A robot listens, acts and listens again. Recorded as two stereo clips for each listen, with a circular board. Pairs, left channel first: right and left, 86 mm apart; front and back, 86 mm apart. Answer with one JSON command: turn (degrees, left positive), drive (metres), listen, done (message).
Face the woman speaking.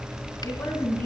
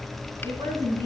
{"turn": -155}
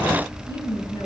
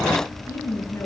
{"turn": -60}
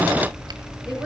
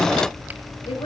{"listen": true}
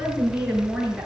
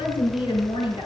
{"done": "Facing the woman speaking."}